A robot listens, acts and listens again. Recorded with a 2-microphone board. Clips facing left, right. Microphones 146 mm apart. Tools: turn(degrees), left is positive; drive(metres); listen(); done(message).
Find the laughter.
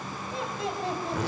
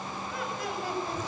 turn(degrees=25)
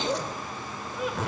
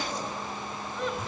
done("Facing the laughter, over 4 m away.")